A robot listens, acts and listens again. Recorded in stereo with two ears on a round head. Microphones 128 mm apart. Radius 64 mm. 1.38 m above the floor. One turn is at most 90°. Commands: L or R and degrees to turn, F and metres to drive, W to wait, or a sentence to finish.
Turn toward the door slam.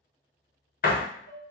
L65
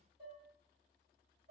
W
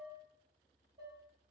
I heard a door slam, but can't make it out now. It was about straight ahead or 50° left.